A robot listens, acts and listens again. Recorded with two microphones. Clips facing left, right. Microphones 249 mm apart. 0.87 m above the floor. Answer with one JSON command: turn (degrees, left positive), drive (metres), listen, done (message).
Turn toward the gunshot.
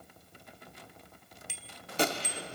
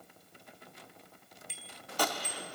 {"turn": 25}
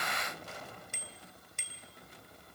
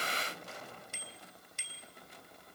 {"listen": true}
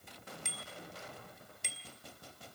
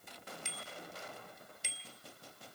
{"done": "I heard a gunshot, but can't make it out now. It was about straight ahead or 130° left."}